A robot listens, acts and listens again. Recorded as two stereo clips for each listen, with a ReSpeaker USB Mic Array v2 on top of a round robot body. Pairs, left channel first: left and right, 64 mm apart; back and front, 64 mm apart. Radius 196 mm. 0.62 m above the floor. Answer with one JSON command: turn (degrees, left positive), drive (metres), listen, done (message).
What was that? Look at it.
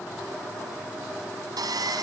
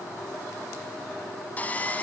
{"turn": -110}
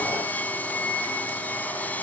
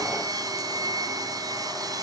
{"turn": 25}
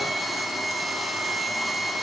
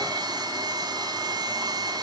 {"done": "Found it: sawing, straight ahead."}